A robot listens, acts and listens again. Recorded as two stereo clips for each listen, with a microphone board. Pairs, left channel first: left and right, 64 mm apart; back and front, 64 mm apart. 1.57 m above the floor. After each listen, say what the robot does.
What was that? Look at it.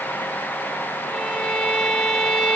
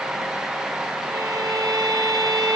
Turn 10° left.
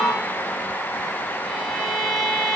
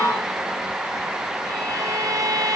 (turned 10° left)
Found it: a violin, straight ahead, 2 to 4 m away.